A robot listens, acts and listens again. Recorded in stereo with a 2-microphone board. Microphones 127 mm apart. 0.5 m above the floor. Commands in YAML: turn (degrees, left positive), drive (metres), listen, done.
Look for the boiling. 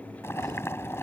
turn: 20
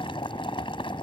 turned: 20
turn: 135
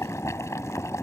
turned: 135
turn: 25
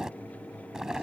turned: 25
done: "Found it: boiling, straight ahead."